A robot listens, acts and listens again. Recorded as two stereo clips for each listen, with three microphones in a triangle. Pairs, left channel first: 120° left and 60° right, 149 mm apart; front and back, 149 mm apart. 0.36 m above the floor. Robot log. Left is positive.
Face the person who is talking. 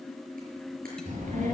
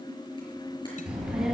note: The child speaking: 90° right.
cmd yaw -90
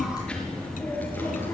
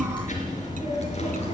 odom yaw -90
note: The child speaking is now 45° left.
cmd yaw +45
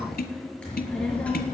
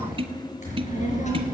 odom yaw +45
note: The child speaking is now 40° left.
cmd yaw +40
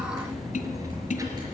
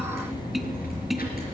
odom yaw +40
note: The child speaking is now 10° left.
cmd yaw +10
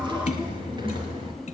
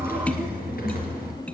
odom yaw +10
end: Found it: a child speaking, straight ahead.